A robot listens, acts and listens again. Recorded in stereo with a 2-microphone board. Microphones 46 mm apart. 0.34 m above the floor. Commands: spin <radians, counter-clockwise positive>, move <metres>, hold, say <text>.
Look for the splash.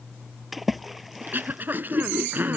spin 0.52
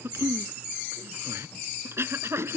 hold
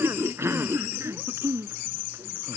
say I heard a splash, but can't make it out now. It was about 30° right or 150° left.